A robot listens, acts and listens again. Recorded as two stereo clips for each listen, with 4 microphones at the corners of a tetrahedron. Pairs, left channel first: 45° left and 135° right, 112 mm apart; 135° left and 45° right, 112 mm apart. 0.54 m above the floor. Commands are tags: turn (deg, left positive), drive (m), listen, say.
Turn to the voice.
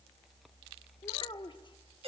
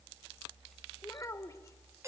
<turn deg="80"/>
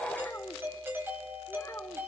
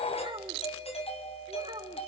<turn deg="-20"/>
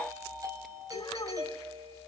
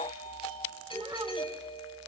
<listen/>
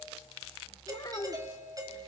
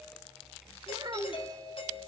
<say>Facing the child speaking, 1 to 2 m away.</say>